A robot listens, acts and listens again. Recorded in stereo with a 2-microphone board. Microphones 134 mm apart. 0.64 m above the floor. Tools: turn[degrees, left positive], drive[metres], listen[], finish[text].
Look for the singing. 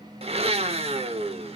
Action: listen[]
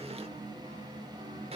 Action: listen[]
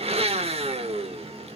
Action: finish[I can't make out singing, only a blender.]